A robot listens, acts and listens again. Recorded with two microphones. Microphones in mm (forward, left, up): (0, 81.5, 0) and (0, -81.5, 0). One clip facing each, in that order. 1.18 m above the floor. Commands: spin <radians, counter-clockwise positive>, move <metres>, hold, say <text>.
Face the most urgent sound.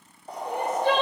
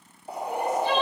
spin 1.05
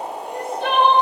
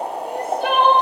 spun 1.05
say Facing the crying.